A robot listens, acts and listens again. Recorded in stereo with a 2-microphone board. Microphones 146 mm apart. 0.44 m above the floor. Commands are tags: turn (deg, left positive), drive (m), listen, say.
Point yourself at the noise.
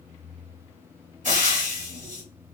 <turn deg="-60"/>
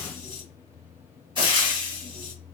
<turn deg="-40"/>
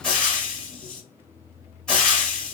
<say>Found it: frying, straight ahead.</say>